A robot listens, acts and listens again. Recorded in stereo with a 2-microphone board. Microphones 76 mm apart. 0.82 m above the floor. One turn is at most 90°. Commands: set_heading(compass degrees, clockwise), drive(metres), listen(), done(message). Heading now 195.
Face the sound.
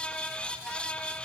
listen()
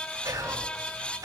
set_heading(245)
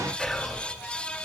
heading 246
done("Found it: whispering, straight ahead.")